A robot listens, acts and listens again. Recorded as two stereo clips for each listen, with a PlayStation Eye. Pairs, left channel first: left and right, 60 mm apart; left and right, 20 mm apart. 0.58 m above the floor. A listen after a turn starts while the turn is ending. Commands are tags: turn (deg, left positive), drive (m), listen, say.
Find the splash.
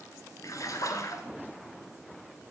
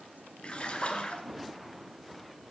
<turn deg="65"/>
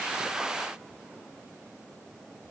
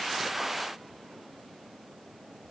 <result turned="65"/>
<listen/>
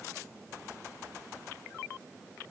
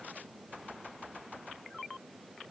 <say>I heard a splash, but can't make it out now. It was about straight ahead or 50° left.</say>